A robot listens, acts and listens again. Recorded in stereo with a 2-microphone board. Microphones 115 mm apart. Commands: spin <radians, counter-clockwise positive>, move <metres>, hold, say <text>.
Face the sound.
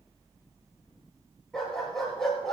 spin 0.52
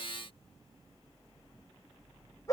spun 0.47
spin 2.62
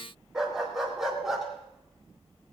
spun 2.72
say Facing the dog barking.